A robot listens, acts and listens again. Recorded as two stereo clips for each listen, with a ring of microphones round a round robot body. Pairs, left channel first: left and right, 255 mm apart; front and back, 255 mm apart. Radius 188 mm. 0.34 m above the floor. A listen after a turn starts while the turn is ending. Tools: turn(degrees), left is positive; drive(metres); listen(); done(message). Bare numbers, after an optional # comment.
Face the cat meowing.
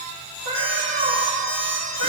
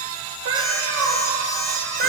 # The cat meowing: 130° left.
turn(130)
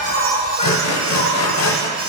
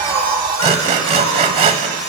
listen()
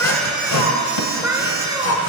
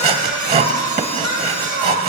# The cat meowing is now 15° right.
turn(-15)
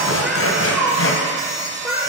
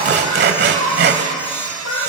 # The cat meowing is now 10° right.
turn(-10)
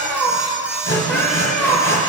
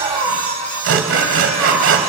done("Facing the cat meowing.")